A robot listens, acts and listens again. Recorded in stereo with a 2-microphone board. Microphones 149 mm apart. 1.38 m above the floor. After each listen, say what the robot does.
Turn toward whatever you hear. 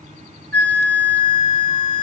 Turn 30° left.
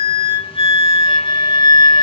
Turn 135° left.
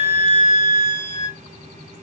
Turn 60° left.
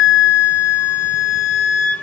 Turn 15° left.
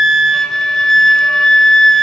Facing the flute.